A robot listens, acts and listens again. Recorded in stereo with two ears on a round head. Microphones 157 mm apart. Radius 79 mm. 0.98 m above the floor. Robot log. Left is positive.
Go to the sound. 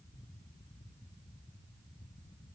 cmd idle
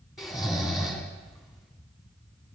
cmd yaw +30
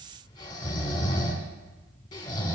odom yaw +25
note: So it is at 155° left.
cmd yaw +155
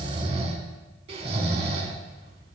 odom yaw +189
note: The snoring is now 35° right.
cmd yaw -35
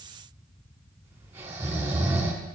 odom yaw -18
note: The snoring is now 15° right.
cmd yaw -15
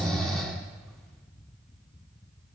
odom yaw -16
cmd fwd 1.0
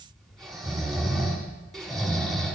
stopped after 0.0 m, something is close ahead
end: Something is in my way. I am facing the snoring but have not reached it.